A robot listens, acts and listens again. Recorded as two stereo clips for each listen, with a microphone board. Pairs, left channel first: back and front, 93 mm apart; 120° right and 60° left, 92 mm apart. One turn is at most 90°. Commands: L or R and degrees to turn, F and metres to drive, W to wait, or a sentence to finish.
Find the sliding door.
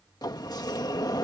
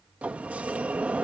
L90
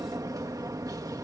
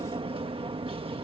L50
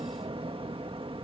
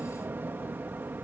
R10
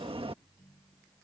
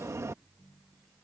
Found it: a sliding door, straight ahead.